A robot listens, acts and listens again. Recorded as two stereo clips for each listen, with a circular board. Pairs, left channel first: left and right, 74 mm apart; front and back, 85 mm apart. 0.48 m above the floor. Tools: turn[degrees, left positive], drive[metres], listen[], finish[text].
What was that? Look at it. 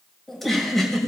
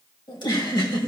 Action: finish[Found it: a giggle, straight ahead, 2 to 4 m away.]